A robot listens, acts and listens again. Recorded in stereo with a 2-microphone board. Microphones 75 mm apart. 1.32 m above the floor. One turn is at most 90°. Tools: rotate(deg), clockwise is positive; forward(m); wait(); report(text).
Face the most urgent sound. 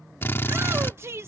rotate(35)
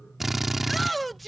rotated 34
report("Found it: a shout, straight ahead.")